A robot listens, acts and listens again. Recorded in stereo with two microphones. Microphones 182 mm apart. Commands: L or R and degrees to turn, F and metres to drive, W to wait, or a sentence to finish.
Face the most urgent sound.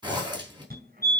R55
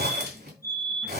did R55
R20
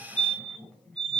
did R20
Facing the fire alarm, 2 to 4 m away.